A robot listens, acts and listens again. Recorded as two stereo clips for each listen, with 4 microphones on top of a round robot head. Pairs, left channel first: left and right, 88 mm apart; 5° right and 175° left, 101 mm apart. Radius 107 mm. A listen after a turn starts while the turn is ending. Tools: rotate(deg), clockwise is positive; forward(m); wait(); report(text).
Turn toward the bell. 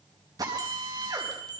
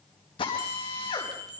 rotate(130)
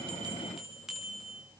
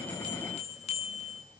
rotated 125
report("Facing the bell.")